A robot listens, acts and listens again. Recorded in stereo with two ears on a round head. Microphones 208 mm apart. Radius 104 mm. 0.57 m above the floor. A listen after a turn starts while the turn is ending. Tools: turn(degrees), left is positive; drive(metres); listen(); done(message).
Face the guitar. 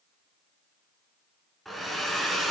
listen()
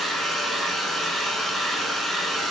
listen()
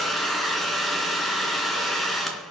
done("I can't make out a guitar, only a hair dryer.")